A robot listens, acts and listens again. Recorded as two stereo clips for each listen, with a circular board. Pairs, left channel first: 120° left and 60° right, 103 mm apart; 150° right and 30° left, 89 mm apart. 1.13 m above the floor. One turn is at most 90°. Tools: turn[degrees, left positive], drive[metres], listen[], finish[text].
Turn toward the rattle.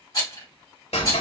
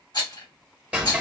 Thought: The rattle: 170° left.
Action: turn[90]
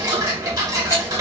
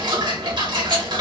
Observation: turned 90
Thought: Nothing new. It was at 80° left.
Action: turn[80]
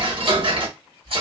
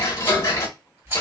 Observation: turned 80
Thought: The rattle is now 30° right.
Action: turn[-30]
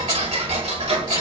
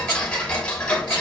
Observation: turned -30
Action: listen[]
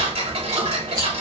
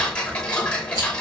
Action: listen[]
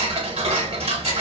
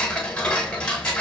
Action: finish[Facing where the rattle came from. I can't hear it now.]